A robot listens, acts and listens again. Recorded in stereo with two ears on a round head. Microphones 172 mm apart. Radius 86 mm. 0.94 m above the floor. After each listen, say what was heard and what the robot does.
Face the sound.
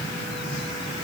Keep listening.
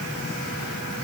Keep listening.
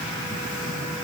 I can't make out anything to turn to.